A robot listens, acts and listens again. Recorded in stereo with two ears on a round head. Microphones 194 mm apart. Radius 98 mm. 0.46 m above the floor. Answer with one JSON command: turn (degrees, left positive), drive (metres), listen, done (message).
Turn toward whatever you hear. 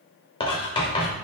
{"turn": 25}
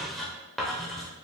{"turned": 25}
{"done": "Found it: writing, straight ahead, under 1 m away."}